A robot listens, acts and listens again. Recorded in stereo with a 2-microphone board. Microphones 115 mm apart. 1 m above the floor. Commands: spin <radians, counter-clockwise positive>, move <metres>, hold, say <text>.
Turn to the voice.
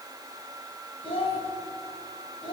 spin 0.96
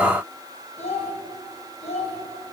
spin 1.22
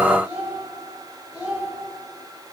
spin -0.17
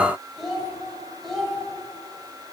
say Found it: a child speaking, straight ahead.